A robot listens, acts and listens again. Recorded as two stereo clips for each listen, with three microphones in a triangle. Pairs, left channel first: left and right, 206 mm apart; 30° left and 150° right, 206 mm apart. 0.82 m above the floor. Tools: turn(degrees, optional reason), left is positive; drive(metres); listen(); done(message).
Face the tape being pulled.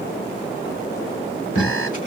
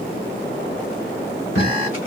turn(degrees=40, reason="The tape being pulled: 40° left.")
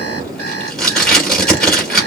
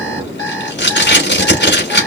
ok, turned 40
done("Found it: tape being pulled, straight ahead.")